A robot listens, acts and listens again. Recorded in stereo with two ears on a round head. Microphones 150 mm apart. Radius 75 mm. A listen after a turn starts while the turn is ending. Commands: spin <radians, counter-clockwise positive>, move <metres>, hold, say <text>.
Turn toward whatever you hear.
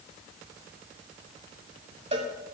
spin -0.61
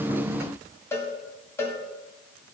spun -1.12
spin 0.35
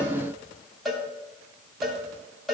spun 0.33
say Found it: a cowbell, straight ahead.